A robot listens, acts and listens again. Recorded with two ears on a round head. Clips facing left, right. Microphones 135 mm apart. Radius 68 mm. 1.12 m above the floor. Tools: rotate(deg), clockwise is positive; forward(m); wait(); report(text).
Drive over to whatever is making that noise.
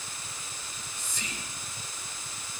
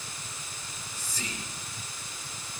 rotate(35)
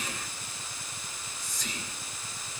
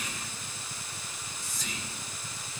forward(1.0)
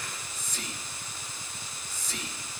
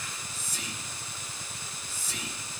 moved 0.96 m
forward(1.0)
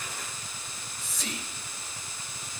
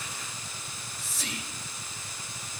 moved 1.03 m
forward(1.0)
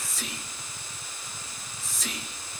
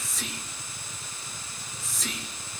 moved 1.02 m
forward(1.0)
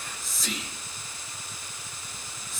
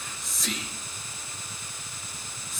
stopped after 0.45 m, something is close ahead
report("Arrived at the whispering, straight ahead.")